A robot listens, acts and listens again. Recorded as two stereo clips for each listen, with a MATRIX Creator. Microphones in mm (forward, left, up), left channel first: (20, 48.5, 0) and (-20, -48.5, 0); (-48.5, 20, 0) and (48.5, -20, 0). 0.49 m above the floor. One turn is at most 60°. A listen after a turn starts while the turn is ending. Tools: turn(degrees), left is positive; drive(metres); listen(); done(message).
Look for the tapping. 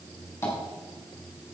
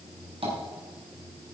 done("Facing the tapping, over 4 m away.")